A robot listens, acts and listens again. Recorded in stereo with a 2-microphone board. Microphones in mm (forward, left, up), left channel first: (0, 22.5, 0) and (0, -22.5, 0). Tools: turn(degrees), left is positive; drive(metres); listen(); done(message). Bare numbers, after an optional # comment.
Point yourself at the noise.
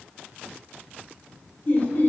# The laughter: about 45° left or 135° left.
turn(45)
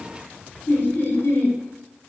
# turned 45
# So it is at 80° left.
turn(80)
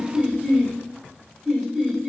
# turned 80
# The laughter is now 10° right.
turn(-10)
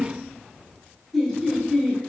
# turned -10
done("Found it: laughter, straight ahead, 1 to 2 m away.")